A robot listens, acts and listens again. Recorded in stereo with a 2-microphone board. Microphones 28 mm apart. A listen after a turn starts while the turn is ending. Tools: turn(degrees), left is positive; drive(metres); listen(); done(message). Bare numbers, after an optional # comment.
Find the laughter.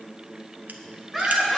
turn(-30)
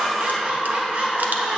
# So it is at 130° right.
turn(-130)
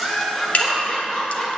# The laughter is now 10° left.
turn(10)
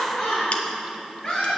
# The laughter is now 10° left.
turn(10)
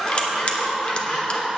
done("Found it: laughter, straight ahead, over 4 m away.")